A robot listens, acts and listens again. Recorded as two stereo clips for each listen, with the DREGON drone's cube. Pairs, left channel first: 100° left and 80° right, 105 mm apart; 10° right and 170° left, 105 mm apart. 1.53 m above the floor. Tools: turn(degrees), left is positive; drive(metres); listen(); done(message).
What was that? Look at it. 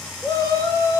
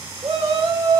turn(degrees=155)
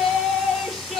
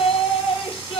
turn(degrees=10)
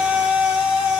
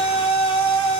done("Found it: a shout, straight ahead, over 4 m away.")